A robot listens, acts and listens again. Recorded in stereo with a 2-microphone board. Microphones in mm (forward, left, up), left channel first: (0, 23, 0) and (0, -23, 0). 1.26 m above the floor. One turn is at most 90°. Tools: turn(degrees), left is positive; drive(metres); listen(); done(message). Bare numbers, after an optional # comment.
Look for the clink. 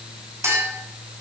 turn(-90)
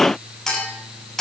# So it is at 10° left.
turn(10)
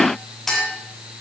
done("Found it: a clink, straight ahead.")